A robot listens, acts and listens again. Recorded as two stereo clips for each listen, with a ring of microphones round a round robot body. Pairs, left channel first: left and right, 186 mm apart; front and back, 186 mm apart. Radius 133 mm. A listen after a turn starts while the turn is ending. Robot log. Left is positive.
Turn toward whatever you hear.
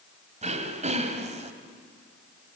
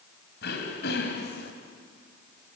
note: The throat clearing: 40° right.
cmd yaw -40
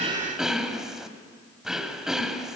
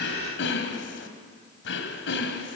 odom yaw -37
end: Found it: throat clearing, straight ahead.